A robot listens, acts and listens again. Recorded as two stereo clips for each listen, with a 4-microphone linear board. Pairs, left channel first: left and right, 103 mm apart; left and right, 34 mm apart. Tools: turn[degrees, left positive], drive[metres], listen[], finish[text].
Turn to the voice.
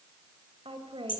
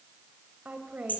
Thought: The woman speaking: about 55° right or 125° right.
Action: turn[-55]
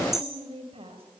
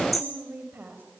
Thought: So it is at 70° right.
Action: turn[-70]
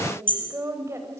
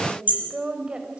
Thought: The woman speaking is now 30° right.
Action: turn[-30]
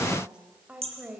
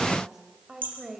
Thought: The woman speaking is now 15° right.
Action: turn[-15]
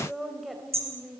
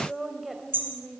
Action: finish[Facing the woman speaking.]